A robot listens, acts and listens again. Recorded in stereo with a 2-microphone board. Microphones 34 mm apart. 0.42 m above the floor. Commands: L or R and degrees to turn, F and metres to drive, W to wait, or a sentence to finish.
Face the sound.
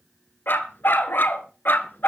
L90
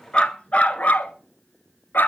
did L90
L65
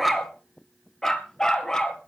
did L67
L20
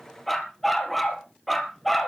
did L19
Facing the dog barking, 2 to 4 m away.